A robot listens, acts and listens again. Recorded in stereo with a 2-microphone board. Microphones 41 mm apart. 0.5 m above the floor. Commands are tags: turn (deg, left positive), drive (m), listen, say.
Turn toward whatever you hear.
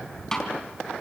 <turn deg="30"/>
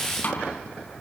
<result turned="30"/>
<turn deg="140"/>
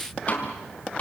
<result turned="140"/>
<turn deg="35"/>
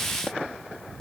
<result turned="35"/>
<turn deg="15"/>
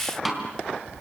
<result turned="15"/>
<say>Facing the snare drum, 2 to 4 m away.</say>